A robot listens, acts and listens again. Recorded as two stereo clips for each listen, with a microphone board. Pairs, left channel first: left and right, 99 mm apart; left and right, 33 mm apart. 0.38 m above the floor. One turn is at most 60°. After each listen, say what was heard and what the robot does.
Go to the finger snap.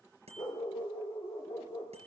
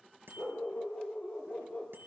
Keep listening.
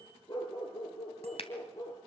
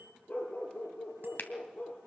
The finger snap: about 65° left or 115° left. Turn 60° left.
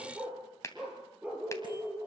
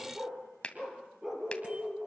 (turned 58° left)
So it is at 30° left. Turn 30° left.
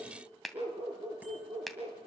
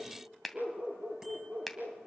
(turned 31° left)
Drive 1.0 m forward.
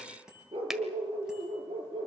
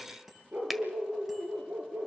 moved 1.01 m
Keep listening.
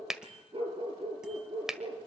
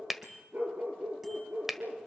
Drive 1.0 m forward.
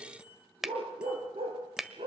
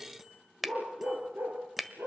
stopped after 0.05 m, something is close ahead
I am next to the finger snap.